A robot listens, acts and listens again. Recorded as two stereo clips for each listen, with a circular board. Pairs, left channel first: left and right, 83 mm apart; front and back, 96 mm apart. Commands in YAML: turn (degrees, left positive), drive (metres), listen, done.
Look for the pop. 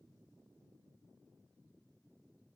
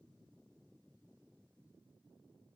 listen: true
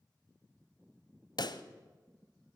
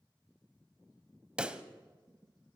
turn: 100
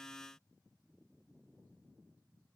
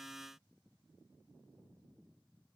done: "Facing where the pop came from. I can't hear it now."